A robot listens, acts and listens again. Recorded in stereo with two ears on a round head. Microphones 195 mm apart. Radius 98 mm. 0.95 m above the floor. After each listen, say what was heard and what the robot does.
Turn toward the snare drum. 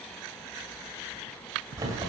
Keep listening.
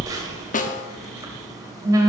The snare drum: about 35° left or 145° left. Turn 35° left.
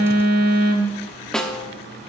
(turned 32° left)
Found it: a snare drum, straight ahead, under 1 m away.